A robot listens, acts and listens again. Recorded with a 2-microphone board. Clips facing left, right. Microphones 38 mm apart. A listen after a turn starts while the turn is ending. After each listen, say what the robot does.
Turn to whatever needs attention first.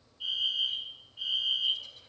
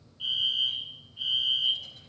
Turn 55° right.
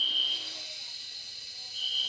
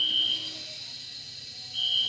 Turn 65° right.
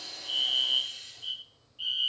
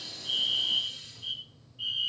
Turn 10° left.
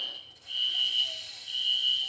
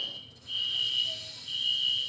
Found it: a fire alarm, straight ahead, 2 to 4 m away.